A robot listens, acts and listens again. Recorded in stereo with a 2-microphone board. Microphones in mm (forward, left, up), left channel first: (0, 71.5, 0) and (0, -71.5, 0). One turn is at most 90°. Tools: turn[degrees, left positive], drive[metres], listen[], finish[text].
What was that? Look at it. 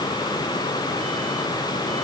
Action: listen[]
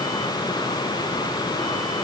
Action: listen[]
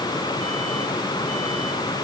Action: finish[I can't make out anything.]